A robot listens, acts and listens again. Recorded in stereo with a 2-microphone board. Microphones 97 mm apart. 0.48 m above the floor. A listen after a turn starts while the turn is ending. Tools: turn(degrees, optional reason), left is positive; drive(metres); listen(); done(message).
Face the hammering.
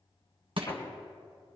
turn(degrees=50, reason="The hammering: about 50° left or 130° left.")
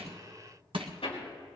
turn(degrees=75, reason="So it is at 75° left.")
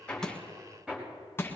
turn(degrees=-10, reason="The hammering is now 10° right.")
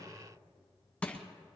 listen()
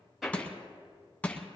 done("Found it: hammering, straight ahead, over 4 m away.")